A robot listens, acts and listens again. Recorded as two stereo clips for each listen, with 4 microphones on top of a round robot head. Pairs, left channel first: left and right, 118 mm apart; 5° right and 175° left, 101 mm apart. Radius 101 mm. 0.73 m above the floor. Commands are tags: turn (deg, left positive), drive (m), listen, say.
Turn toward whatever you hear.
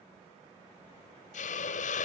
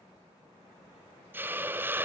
<turn deg="105"/>
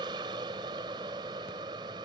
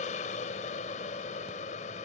<turn deg="-25"/>
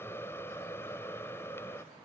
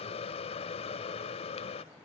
<turn deg="15"/>
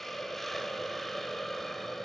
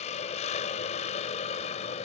<say>Found it: a hiss, straight ahead.</say>